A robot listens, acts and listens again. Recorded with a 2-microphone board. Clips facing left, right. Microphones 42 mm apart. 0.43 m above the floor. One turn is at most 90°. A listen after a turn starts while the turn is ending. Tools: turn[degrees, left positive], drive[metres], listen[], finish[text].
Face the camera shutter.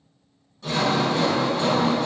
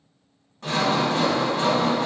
Action: listen[]
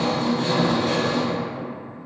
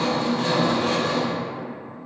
Action: listen[]
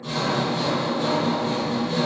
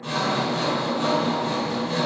Action: finish[I can't make out a camera shutter, only sawing.]